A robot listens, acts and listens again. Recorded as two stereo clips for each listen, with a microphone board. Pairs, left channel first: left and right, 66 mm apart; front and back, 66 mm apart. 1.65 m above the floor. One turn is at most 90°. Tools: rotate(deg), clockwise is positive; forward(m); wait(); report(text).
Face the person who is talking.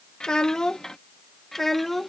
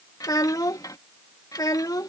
report("Facing the child speaking.")